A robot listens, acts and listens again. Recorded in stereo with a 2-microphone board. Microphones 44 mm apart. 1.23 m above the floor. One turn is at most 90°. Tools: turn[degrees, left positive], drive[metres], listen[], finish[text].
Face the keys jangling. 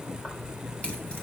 Thought: The keys jangling: about 25° left or 155° left.
Action: turn[25]
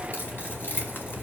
Thought: So it is at 120° left.
Action: turn[90]
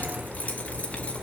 Thought: The keys jangling is now 25° left.
Action: turn[25]
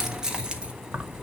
Thought: The keys jangling is now 40° right.
Action: turn[-40]
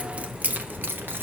Thought: The keys jangling is now 55° right.
Action: turn[-55]
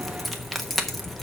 Action: finish[Found it: keys jangling, straight ahead.]